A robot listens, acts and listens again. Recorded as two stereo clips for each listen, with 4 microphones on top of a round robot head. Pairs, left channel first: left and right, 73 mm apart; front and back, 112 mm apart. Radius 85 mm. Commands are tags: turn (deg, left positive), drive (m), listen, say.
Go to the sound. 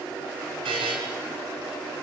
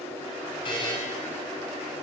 <turn deg="-60"/>
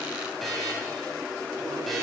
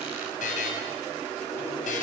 <drive m="1.0"/>
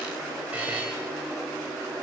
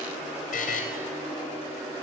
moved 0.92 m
<turn deg="-10"/>
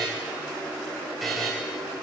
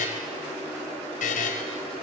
<drive m="1.0"/>
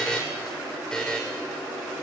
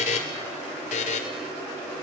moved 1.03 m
<drive m="1.0"/>
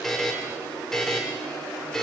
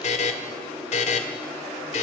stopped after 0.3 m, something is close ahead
<say>Arrived at the buzzer, straight ahead.</say>